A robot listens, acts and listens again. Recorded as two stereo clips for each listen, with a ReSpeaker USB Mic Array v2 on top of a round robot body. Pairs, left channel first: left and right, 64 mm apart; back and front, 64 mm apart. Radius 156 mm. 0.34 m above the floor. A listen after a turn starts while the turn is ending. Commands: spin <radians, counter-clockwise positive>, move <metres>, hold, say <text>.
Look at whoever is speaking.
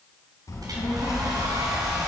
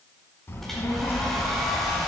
spin 2.18
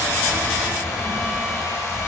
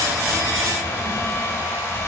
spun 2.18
hold
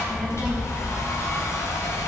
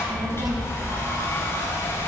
spin -0.17
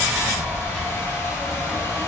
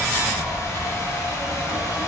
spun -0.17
say Facing the child speaking.